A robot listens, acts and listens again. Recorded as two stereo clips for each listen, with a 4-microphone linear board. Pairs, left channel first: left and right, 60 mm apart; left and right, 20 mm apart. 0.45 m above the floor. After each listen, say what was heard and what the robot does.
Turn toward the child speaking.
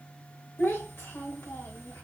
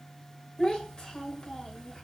The child speaking: about 45° left or 135° left. Turn 45° left.
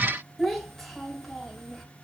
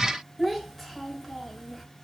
Facing the child speaking.